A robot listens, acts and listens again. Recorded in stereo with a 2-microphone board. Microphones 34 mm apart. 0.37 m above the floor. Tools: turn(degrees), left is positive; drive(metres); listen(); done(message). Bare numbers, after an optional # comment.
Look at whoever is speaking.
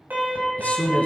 # The man speaking: about 45° left or 135° left.
turn(45)
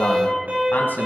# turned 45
# So it is at 80° left.
turn(80)
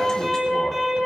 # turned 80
listen()
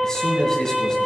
# The man speaking is now 15° left.
turn(15)
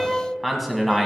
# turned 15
done("Facing the man speaking, 2 to 4 m away.")